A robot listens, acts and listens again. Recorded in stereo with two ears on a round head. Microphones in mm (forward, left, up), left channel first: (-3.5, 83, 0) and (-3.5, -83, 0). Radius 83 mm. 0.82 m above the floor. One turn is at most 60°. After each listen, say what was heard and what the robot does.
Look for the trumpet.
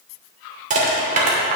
Keep listening.
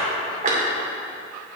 Keep listening.
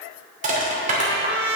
The trumpet: about 60° right or 120° right. Turn 60° right.
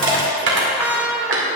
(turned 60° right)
So it is at 10° right. Turn 10° right.
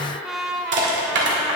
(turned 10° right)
Facing the trumpet.